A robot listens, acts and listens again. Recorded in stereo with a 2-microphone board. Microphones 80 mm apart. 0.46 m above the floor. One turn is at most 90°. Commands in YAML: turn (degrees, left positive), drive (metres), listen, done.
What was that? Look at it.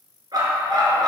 turn: -60
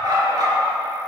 turn: -55
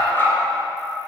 turn: 30
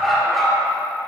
done: "Facing the dog barking, 2 to 4 m away."